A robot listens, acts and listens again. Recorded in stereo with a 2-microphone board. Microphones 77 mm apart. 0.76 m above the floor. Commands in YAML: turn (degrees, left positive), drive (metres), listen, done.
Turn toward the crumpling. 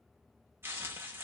turn: -30
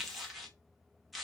done: "Facing the crumpling, under 1 m away."